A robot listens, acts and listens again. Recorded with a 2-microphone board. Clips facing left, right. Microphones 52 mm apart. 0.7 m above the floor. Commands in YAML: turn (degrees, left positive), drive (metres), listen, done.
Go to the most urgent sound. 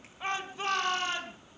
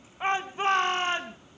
turn: -30
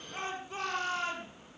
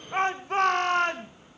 turn: -120
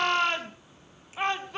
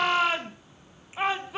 drive: 1.0
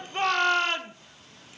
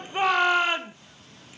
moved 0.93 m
turn: -10
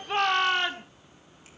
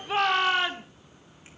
drive: 1.0
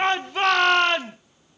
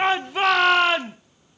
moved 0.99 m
drive: 1.0
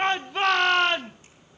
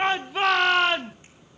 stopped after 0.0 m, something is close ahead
done: "Arrived at the shout, straight ahead."